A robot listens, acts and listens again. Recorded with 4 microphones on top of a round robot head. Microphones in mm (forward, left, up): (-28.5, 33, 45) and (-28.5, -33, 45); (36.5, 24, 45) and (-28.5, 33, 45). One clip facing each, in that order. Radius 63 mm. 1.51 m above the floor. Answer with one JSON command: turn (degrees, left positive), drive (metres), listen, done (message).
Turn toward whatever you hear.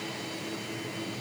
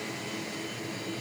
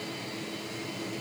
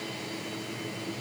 {"listen": true}
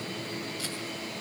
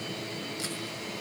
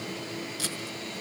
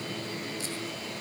{"turn": -20}
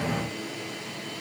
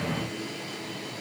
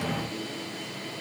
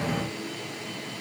{"listen": true}
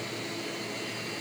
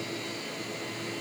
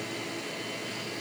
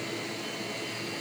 {"listen": true}
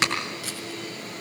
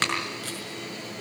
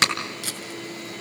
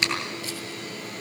{"done": "Facing the tape being pulled."}